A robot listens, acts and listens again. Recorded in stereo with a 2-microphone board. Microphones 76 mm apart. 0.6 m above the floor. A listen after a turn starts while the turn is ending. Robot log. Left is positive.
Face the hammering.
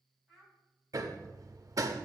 note: The hammering: about 50° right or 130° right.
cmd yaw -50
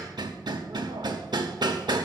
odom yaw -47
note: So it is at 80° right.
cmd yaw -80
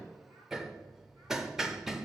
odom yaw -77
end: Facing the hammering, under 1 m away.